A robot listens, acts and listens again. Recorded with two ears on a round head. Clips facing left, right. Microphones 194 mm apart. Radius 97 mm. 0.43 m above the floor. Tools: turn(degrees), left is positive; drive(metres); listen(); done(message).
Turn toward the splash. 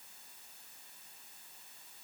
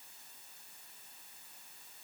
listen()
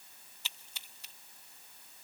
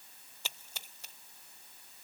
turn(degrees=-40)
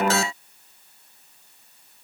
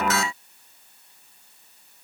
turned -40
listen()
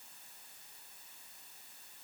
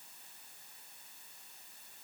done("I heard a splash, but can't make it out now. It was about straight ahead or 100° right.")